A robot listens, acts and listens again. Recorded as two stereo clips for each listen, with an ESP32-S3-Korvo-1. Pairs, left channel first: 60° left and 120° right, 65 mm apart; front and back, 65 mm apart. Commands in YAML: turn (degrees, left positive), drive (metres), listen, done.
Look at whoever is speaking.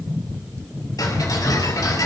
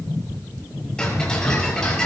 listen: true
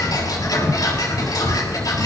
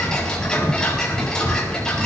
listen: true
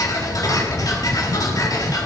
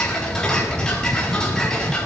done: "I can't make out anyone speaking, only ticking."